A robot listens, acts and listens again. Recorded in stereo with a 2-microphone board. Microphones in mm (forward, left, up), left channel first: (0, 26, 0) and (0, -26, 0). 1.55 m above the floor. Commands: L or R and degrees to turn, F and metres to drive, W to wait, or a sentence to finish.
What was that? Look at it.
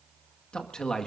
L30
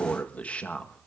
L20
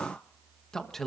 L30
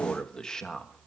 L30
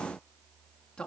L160
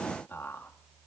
L40
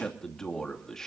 L10
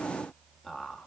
Facing the man speaking.